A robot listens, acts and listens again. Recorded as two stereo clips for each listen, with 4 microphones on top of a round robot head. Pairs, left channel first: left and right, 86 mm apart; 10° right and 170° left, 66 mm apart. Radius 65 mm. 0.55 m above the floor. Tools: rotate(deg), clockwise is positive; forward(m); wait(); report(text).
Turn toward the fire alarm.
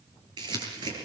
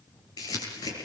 wait()
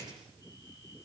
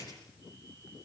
wait()
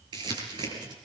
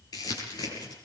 report("I can't make out a fire alarm to turn to.")